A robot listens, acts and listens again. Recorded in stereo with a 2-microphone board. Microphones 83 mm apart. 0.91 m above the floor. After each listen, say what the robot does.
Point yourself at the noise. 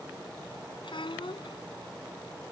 Turn 90° left.
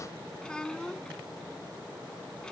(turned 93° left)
Turn 10° left.
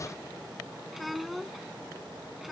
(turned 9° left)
Facing the child speaking.